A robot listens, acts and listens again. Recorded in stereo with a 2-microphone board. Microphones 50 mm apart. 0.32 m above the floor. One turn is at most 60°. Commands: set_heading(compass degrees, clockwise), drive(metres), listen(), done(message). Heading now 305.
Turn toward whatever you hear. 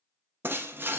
set_heading(350)
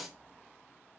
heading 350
done("Found it: breaking glass, straight ahead, under 1 m away.")